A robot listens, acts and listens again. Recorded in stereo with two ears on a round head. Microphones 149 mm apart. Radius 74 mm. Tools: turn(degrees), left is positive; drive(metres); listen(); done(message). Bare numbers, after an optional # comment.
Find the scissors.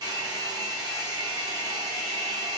listen()
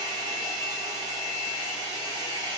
listen()
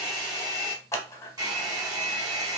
# The scissors: about 15° left or 165° left.
turn(15)
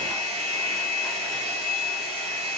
listen()
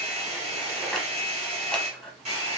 done("Found it: scissors, straight ahead.")